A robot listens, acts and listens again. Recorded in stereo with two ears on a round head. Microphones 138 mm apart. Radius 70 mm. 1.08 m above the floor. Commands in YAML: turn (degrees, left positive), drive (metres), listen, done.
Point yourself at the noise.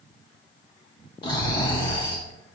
turn: 30
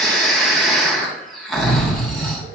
done: "Facing the snoring."